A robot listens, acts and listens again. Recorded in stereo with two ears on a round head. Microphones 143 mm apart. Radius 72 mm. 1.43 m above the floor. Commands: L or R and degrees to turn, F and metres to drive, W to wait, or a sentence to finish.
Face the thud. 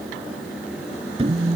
R35
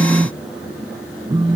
W
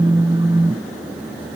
I heard a thud, but can't make it out now. It was about straight ahead or 110° right.